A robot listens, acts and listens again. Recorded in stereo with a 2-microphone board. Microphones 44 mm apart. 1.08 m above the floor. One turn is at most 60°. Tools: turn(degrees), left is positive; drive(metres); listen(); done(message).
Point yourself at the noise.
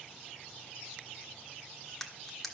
turn(degrees=30)
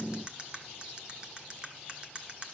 turn(degrees=-25)
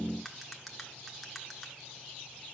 done("Found it: cutlery clinking, straight ahead.")